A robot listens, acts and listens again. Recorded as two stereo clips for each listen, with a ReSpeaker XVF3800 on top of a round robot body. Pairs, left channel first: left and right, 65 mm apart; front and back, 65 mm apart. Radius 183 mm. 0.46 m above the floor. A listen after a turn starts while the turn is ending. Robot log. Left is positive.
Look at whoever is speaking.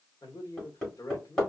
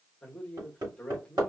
note: The man speaking: 75° left.
cmd yaw +75
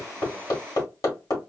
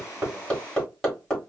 cmd idle
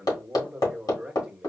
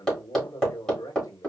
note: The man speaking is now 15° right.
cmd yaw -15
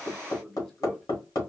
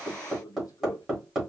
end: Facing the man speaking, 1 to 2 m away.